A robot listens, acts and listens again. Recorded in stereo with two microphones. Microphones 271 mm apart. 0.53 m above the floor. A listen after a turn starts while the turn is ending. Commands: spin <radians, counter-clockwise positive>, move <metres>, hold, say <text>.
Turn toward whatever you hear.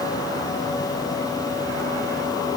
hold
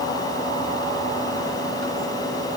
hold
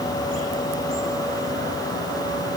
say I can't make out anything to turn to.